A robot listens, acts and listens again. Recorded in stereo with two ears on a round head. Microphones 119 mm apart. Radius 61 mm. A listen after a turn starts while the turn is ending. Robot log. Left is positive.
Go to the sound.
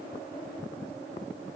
cmd idle
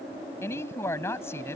note: The woman speaking: about 20° left or 160° left.
cmd yaw +20
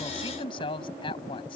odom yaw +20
note: So it is at 135° left.
cmd yaw +135
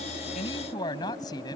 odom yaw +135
note: The woman speaking is now 30° left.
cmd yaw +30
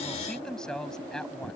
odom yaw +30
cmd fwd 1.0
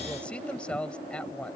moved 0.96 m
note: The woman speaking is now 10° left.
cmd yaw +10
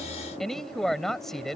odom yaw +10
cmd fwd 1.0
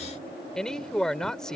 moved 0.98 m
cmd fwd 1.0
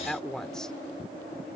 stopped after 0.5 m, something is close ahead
end: Arrived at the woman speaking, straight ahead.